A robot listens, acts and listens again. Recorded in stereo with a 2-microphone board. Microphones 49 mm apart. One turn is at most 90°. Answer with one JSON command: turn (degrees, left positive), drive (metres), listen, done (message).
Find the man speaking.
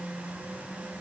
{"listen": true}
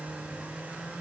{"listen": true}
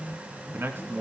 {"turn": -50}
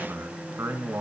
{"turn": -80}
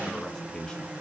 {"turn": 20}
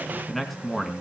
{"done": "Found it: a man speaking, straight ahead."}